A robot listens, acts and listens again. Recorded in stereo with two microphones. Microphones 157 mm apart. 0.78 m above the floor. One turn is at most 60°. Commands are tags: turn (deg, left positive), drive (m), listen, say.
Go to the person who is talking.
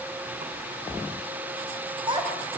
<turn deg="-30"/>
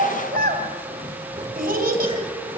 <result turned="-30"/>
<turn deg="-60"/>
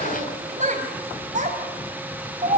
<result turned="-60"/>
<turn deg="-50"/>
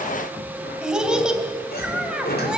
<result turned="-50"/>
<drive m="1.0"/>
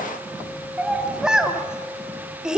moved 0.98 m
<drive m="1.0"/>
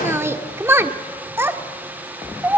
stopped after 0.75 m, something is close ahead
<turn deg="-15"/>
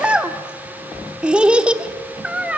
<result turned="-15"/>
<say>Arrived at the child speaking, straight ahead.</say>